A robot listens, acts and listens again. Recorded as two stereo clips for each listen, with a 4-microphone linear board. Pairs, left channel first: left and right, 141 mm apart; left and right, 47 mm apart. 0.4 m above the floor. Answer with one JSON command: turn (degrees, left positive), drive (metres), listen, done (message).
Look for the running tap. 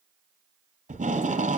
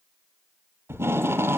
{"listen": true}
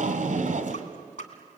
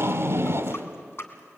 {"turn": 60}
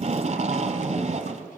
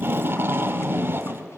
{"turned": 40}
{"listen": true}
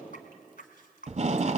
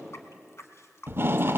{"turn": 80}
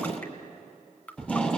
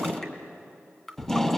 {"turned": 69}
{"turn": 10}
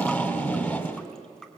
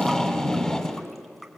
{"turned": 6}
{"done": "Facing the running tap."}